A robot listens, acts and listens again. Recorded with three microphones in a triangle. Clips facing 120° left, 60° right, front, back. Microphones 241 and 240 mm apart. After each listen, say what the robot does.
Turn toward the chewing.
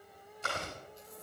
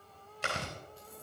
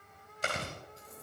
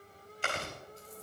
Turn 50° right.
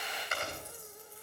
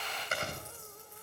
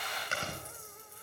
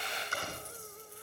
Found it: chewing, straight ahead.